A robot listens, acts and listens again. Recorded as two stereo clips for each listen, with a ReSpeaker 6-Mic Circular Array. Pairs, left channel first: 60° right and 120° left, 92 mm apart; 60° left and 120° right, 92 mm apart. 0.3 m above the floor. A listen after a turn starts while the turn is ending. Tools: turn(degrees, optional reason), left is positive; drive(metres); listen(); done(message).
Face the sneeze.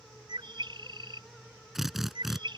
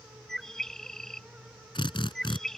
listen()
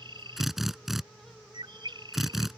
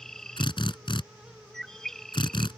listen()
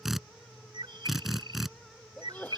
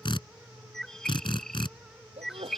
turn(degrees=-135, reason="The sneeze: 135° right.")
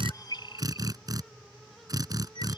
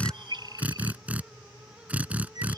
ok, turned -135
done("I heard a sneeze from this way, but can't make it out now.")